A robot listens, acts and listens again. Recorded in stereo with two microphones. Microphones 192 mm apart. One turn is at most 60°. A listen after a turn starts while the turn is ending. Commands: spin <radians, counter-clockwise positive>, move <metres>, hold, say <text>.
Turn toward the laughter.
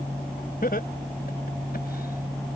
spin 0.96
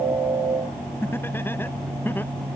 spin 0.17
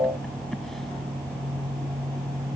hold
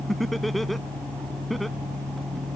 say Found it: laughter, straight ahead.